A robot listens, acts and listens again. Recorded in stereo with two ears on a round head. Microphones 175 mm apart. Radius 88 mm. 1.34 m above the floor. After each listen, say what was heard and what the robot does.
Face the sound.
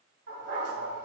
The dog barking: about 55° right or 125° right. Turn 55° right.
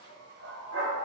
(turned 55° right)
So it is at 65° right. Turn 65° right.
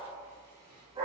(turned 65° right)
The dog barking is now 25° right. Turn 25° right.
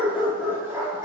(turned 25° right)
The dog barking is now 15° right. Turn 15° right.
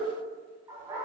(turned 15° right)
The dog barking is now 15° right. Turn 15° right.
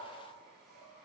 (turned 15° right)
Keep listening.
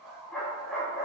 Facing the dog barking.